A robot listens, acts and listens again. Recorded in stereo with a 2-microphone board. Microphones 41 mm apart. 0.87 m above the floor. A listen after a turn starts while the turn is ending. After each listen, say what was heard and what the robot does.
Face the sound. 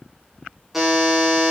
Turn 30° right.
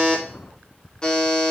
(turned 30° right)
So it is at 20° left. Turn 20° left.
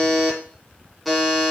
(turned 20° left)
Facing the buzzer, 1 to 2 m away.